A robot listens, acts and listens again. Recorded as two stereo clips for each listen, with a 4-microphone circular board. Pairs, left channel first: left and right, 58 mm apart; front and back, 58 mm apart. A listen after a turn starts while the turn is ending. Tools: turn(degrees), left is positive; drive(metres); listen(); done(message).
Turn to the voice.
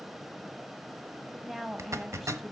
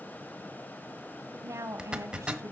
turn(degrees=-170)
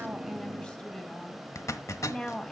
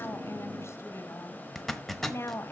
turn(degrees=20)
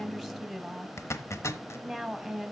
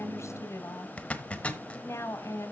done("Facing the woman speaking.")